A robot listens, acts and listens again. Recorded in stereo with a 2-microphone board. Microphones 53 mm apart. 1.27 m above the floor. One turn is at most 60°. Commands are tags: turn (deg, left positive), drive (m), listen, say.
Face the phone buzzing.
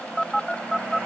<turn deg="30"/>
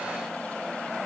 <listen/>
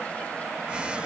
<listen/>
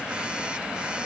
<turn deg="-20"/>
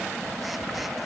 <say>Facing the phone buzzing.</say>